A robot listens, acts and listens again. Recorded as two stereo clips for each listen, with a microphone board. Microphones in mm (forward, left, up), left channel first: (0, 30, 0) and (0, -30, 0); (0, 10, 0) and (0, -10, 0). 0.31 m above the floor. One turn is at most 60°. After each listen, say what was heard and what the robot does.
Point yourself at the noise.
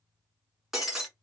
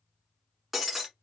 Turn 30° right.
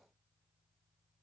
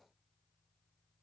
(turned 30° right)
Keep listening.
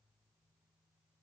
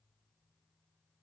I heard breaking glass, but can't make it out now. It was about 20° left or 140° right.